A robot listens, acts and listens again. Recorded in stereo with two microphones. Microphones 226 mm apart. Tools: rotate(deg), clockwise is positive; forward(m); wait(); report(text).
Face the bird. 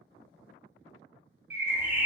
rotate(30)
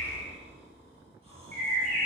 rotate(140)
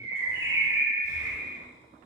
rotate(20)
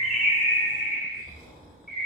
report("Found it: a bird, straight ahead, under 1 m away.")